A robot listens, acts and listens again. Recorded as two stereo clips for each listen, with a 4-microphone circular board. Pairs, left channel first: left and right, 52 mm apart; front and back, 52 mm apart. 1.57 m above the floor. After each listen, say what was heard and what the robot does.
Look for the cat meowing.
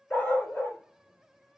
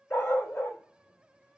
Keep listening.
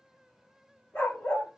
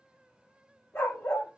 Keep listening.
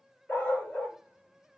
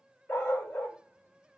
I can't make out a cat meowing, only a dog barking.